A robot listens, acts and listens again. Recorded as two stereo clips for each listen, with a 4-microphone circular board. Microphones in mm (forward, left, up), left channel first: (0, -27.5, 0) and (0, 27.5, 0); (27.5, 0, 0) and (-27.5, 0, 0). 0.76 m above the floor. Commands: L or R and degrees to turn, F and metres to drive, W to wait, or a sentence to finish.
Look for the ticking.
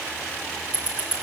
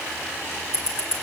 L30
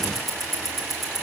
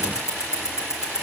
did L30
Found it: ticking, straight ahead.